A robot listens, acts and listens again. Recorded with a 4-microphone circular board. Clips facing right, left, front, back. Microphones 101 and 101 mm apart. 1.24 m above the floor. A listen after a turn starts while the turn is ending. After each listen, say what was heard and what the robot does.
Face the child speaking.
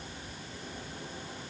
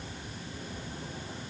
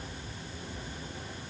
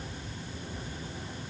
Keep listening.
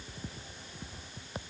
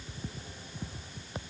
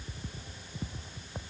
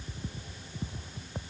Keep listening.
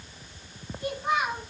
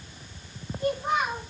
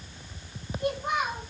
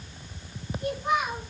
The child speaking: 30° left. Turn 30° left.
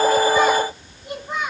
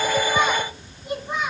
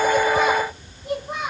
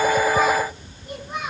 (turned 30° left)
Facing the child speaking, over 4 m away.